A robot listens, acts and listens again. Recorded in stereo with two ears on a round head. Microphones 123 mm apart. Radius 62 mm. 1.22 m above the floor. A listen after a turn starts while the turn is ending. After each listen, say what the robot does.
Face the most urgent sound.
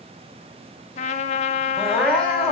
Turn 30° left.
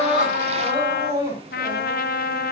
Turn 25° right.
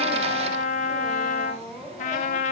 Facing the crying.